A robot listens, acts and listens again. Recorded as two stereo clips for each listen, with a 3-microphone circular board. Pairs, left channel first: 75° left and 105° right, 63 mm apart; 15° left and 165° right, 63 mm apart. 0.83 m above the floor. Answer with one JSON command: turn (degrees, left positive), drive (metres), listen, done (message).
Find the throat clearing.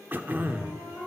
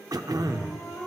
{"turn": -165}
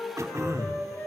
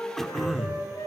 {"turn": -70}
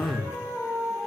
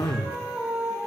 {"turn": 20}
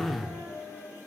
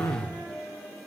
{"done": "Facing the throat clearing, under 1 m away."}